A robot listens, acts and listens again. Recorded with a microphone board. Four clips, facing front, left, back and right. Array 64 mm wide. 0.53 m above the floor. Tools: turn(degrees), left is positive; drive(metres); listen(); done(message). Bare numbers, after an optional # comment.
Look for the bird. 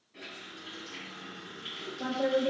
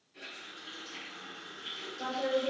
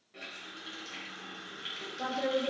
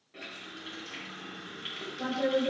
listen()
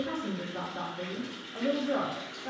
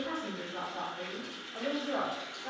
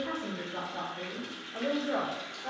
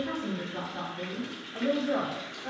listen()
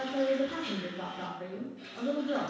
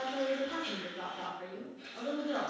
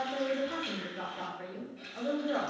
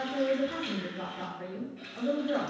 done("I can't make out a bird, only a running tap and a woman speaking.")